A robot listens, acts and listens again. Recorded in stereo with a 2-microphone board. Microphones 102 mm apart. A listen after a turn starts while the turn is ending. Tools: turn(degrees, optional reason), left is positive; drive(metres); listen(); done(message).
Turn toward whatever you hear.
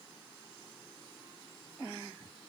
listen()
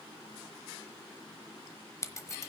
turn(degrees=30, reason="The scissors: about 30° left or 150° left.")
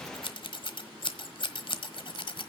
turn(degrees=115, reason="So it is at 115° left.")
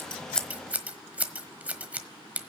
turn(degrees=-15, reason="The scissors is now 15° right.")
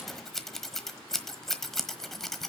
done("Facing the scissors.")